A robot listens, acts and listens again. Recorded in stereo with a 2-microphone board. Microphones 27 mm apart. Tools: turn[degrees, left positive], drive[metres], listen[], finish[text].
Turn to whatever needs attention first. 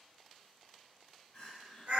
Thought: The crying: about 50° left or 130° left.
Action: turn[50]
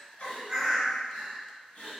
Thought: So it is at 75° left.
Action: turn[75]
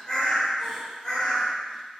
Action: finish[Facing the crying.]